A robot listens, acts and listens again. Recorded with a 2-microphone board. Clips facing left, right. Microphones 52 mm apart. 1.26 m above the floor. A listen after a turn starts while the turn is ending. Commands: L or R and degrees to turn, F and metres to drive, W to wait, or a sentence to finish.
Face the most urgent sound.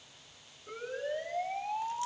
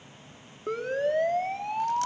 R70
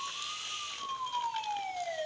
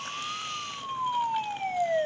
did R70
R40
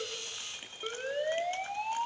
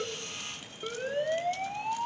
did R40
Facing the siren.